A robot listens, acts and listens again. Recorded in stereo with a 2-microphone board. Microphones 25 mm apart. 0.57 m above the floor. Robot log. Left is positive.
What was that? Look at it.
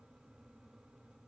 cmd idle
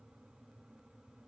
cmd idle
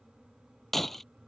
cmd yaw +30
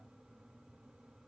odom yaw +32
cmd idle
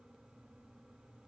end: I heard breaking glass, but can't make it out now. It was about 25° right or 140° left.